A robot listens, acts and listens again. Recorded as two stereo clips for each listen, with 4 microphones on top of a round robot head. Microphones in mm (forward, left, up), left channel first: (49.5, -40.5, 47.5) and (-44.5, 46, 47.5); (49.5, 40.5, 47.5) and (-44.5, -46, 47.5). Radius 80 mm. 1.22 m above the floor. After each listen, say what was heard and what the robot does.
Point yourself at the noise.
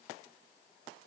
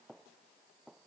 Keep listening.
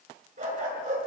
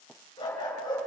The dog barking: 105° left. Turn 105° left.
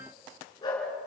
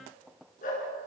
The dog barking is now 20° left. Turn 20° left.
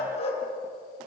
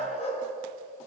Found it: a dog barking, straight ahead, over 4 m away.